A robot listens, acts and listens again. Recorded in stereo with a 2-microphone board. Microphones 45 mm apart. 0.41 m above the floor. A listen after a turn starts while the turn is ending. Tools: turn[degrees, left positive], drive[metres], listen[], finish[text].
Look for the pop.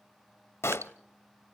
Thought: The pop: about 70° left or 110° left.
Action: turn[70]
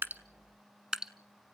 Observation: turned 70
Action: listen[]
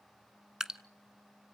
Action: finish[I heard a pop, but can't make it out now. It was about straight ahead or 40° left.]